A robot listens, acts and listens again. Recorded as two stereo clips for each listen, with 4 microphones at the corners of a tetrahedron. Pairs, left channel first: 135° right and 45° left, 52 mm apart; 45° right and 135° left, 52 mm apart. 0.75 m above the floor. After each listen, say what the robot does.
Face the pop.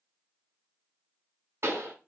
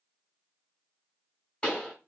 Turn 25° left.
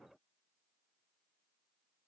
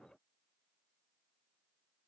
I heard a pop from this way, but can't make it out now.